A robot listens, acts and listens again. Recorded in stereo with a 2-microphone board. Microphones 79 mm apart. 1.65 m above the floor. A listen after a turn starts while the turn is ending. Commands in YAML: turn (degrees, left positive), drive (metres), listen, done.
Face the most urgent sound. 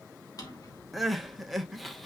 turn: 30
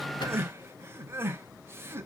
turn: -30
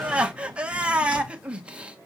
turn: -15
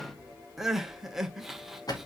done: "Facing the crying."